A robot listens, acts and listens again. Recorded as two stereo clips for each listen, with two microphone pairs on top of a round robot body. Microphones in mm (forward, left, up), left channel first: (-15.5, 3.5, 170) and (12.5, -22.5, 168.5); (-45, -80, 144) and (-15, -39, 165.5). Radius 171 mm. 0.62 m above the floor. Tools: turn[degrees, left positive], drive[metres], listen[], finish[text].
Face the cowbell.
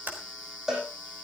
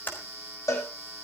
Thought: The cowbell: 120° right.
Action: turn[-120]
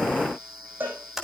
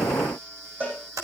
Action: finish[Facing the cowbell, over 4 m away.]